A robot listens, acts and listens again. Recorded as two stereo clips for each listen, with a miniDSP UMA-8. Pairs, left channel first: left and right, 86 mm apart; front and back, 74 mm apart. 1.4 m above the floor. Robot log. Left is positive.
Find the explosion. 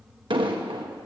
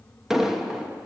note: The explosion: 95° right.
cmd yaw -95
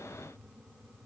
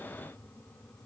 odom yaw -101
end: Facing where the explosion came from. I can't hear it now.